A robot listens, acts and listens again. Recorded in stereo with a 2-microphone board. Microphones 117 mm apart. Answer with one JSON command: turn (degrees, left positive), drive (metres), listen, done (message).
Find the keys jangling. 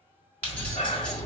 {"turn": 30}
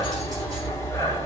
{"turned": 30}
{"listen": true}
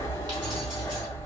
{"listen": true}
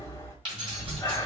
{"turn": -45}
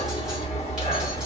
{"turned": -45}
{"listen": true}
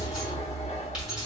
{"done": "Found it: keys jangling, straight ahead, 2 to 4 m away."}